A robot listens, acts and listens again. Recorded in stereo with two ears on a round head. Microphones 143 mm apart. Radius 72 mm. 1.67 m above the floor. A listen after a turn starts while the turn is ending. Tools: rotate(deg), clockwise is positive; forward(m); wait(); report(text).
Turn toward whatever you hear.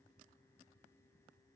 wait()
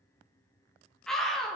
rotate(-30)
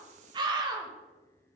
rotate(30)
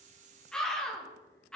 report("Facing the scream, 2 to 4 m away.")